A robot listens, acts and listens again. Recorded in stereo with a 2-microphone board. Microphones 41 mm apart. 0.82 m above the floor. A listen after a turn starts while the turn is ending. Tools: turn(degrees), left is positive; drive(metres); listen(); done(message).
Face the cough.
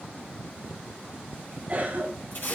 turn(degrees=-40)
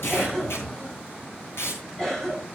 done("Found it: a cough, straight ahead.")